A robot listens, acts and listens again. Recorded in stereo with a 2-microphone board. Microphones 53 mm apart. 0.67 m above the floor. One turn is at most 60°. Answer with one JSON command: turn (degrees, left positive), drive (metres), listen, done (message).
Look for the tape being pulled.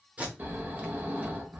{"turn": -25}
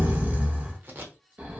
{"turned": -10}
{"turn": -60}
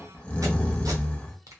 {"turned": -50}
{"turn": -60}
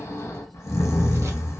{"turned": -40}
{"turn": -55}
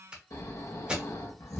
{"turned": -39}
{"turn": -15}
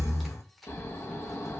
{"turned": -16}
{"listen": true}
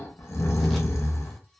{"listen": true}
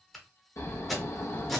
{"done": "Found it: tape being pulled, straight ahead."}